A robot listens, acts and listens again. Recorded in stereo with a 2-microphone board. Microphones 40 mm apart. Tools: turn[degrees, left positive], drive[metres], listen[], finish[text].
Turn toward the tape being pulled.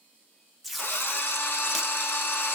Action: turn[30]
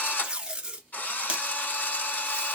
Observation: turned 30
Thought: So it is at 30° right.
Action: turn[-30]
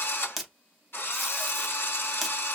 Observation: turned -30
Action: finish[Found it: tape being pulled, straight ahead.]